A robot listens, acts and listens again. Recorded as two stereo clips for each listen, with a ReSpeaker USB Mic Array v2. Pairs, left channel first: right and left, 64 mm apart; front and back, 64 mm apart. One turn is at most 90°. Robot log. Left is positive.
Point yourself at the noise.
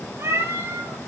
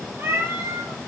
note: The cat meowing: 125° left.
cmd yaw +90
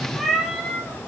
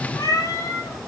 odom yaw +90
end: Found it: a cat meowing, straight ahead, 2 to 4 m away.